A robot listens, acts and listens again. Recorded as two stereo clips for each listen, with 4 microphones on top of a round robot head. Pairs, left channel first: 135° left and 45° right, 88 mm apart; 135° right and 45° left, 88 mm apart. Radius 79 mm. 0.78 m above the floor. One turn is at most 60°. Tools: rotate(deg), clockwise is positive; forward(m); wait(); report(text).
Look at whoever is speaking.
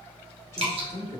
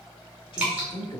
rotate(60)
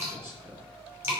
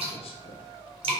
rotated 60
rotate(60)
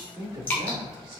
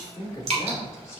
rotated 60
rotate(60)
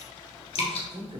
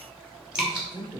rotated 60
report("Facing the man speaking, 2 to 4 m away.")